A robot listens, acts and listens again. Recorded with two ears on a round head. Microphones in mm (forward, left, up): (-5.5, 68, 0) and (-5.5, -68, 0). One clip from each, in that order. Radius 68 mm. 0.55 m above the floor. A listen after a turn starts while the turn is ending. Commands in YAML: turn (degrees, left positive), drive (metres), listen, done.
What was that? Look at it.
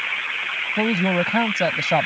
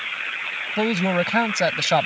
turn: -70
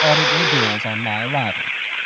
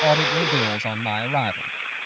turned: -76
turn: -30
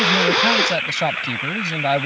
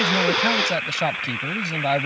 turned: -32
done: "Found it: a man speaking, straight ahead."